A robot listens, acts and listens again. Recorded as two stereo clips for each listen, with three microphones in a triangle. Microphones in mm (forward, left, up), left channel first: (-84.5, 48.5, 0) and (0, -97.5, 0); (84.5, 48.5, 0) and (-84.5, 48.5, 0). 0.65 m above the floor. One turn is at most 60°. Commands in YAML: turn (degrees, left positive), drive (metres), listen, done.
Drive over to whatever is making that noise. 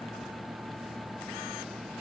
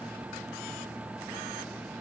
listen: true
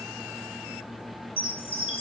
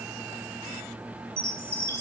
turn: 60
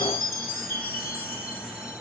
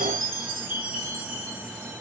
turn: 60
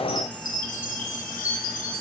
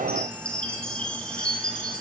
turn: 60
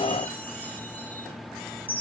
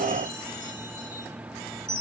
turn: 40
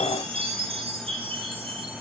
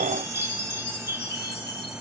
drive: 1.0
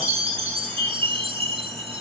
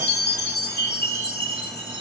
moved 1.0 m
drive: 1.0
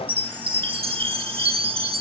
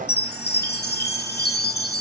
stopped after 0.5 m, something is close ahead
done: "Arrived at the chime, straight ahead."